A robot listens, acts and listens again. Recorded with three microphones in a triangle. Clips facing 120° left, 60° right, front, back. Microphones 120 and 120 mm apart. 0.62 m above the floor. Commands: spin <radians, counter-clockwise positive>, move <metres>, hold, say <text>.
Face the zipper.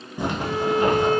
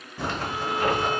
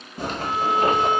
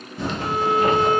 spin 0.79
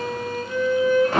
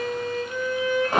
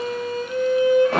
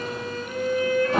spin 0.26
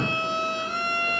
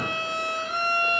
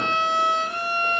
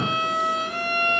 hold
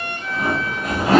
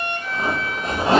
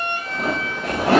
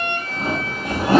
say Found it: a zipper, straight ahead.